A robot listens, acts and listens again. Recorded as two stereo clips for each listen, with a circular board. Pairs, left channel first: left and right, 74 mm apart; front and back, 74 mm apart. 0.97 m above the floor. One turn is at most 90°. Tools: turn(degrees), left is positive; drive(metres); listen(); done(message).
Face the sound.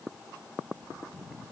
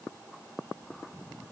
listen()
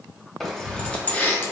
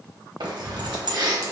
turn(degrees=90)
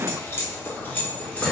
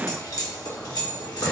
turn(degrees=20)
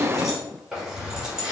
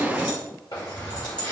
turn(degrees=-10)
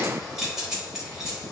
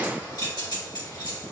done("Found it: keys jangling, straight ahead.")